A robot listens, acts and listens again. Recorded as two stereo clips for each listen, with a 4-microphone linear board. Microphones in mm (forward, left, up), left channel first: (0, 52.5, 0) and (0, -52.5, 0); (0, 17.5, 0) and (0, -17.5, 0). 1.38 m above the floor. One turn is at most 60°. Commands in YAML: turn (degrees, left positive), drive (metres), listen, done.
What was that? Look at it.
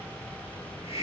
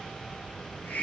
turn: 60
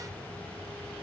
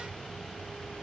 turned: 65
listen: true
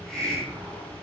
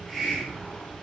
done: "Facing the hiss, over 4 m away."